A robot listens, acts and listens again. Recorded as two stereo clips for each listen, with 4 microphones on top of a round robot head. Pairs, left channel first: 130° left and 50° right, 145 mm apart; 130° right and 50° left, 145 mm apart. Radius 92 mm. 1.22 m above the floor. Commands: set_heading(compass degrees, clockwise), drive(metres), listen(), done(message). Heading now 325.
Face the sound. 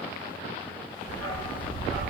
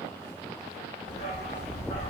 set_heading(145)
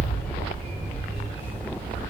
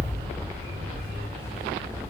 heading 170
set_heading(180)
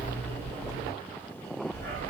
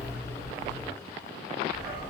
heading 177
set_heading(197)
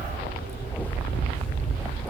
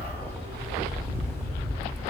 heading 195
done("Facing the dog barking.")